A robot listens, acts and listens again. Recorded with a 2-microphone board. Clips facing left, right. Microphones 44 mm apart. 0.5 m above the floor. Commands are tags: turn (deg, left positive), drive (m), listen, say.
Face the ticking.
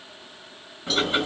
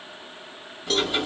<turn deg="30"/>
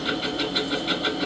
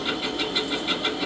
<say>Found it: ticking, straight ahead.</say>